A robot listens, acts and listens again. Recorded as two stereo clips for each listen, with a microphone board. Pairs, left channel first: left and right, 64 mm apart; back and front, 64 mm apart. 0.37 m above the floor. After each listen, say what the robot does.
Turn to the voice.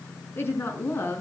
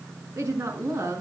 Turn 35° left.
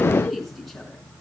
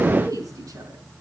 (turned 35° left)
Found it: a woman speaking, straight ahead.